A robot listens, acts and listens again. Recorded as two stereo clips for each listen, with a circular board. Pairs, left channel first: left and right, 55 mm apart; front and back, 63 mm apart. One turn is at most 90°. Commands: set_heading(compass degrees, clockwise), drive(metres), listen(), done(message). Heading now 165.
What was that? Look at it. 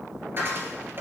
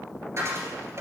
set_heading(255)
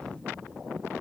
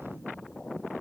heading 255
set_heading(300)
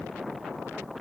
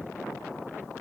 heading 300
done("Facing where the dropped coin came from. I can't hear it now.")